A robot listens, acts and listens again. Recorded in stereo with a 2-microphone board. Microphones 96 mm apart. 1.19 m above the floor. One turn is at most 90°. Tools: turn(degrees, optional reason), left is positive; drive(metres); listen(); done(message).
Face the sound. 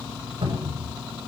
turn(degrees=-60, reason="The cupboard door: about 60° right or 120° right.")
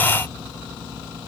listen()
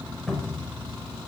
done("Found it: a cupboard door, straight ahead, over 4 m away.")